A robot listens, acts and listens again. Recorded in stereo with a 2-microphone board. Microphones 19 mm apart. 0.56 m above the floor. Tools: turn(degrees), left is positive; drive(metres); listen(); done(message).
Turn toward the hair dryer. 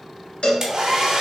turn(degrees=-35)
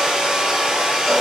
turn(degrees=-110)
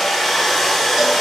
done("Facing the hair dryer.")